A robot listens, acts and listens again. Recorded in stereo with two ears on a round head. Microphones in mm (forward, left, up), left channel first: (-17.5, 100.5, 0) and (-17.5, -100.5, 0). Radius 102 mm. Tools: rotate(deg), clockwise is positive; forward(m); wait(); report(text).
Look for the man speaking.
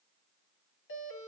wait()
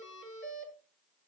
wait()
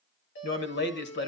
rotate(-55)
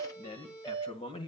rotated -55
rotate(-25)
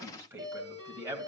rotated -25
rotate(15)
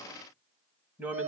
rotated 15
report("Found it: a man speaking, straight ahead.")